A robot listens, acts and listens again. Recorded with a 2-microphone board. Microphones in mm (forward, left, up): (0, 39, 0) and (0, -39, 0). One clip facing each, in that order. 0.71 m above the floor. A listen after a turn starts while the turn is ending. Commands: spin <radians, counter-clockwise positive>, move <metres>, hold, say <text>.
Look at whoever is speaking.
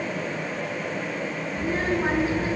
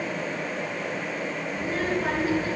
spin 0.44
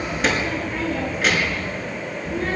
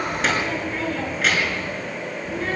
say Found it: a child speaking, straight ahead, over 4 m away.